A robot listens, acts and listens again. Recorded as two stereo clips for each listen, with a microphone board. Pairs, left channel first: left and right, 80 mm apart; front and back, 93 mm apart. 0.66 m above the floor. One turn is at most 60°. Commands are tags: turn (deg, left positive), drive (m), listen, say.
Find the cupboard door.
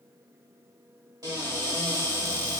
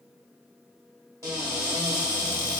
<turn deg="-60"/>
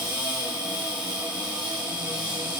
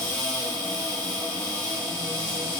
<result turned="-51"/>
<turn deg="-60"/>
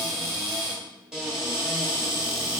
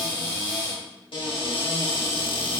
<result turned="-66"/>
<say>Facing the cupboard door.</say>